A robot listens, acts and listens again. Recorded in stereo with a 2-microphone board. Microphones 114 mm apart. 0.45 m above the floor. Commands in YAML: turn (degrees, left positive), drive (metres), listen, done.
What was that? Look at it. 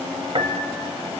turn: -50
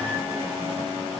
listen: true
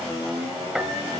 done: "Found it: a piano, straight ahead, 1 to 2 m away."